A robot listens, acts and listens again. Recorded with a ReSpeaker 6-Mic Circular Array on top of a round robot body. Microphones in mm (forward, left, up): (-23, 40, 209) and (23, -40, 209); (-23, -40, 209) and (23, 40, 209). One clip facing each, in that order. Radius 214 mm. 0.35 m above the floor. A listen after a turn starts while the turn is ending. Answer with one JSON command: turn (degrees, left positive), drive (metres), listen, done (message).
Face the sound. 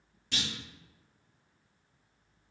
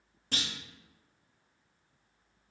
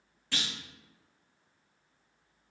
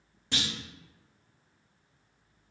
{"turn": -10}
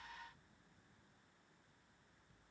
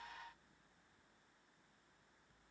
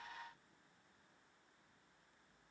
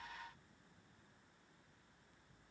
{"done": "Facing where the clunk came from. I can't hear it now."}